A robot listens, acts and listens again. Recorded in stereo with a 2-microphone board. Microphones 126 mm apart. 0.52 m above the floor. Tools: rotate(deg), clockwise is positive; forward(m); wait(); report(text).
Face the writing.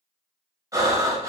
wait()
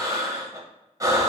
wait()
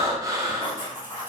rotate(15)
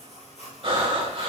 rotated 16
report("Found it: writing, straight ahead, 2 to 4 m away.")